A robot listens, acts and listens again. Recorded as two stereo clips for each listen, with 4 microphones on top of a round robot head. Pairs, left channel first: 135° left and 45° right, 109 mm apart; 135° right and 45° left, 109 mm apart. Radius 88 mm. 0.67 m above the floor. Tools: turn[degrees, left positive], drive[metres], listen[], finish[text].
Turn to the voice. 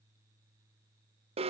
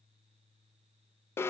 Action: listen[]
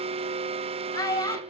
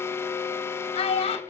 Thought: The child speaking: 165° right.
Action: turn[-165]
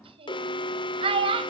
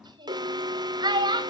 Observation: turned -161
Action: finish[Facing the child speaking, 2 to 4 m away.]